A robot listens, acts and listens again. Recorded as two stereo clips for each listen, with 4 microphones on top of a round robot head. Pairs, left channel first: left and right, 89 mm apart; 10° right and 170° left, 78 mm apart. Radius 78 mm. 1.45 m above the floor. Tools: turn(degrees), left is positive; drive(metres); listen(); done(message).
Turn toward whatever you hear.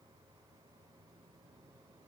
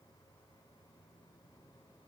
listen()
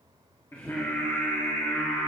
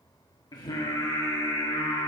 turn(degrees=15)
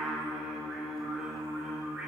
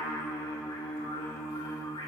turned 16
turn(degrees=-15)
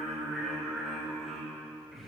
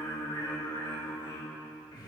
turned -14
done("Facing the singing.")